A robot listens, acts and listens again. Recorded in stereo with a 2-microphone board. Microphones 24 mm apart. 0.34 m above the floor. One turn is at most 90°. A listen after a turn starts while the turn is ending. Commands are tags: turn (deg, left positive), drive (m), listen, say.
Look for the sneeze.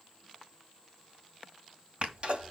<turn deg="-50"/>
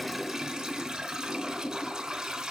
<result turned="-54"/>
<listen/>
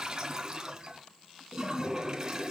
<say>I heard a sneeze, but can't make it out now. It was about 5° left or 75° right.</say>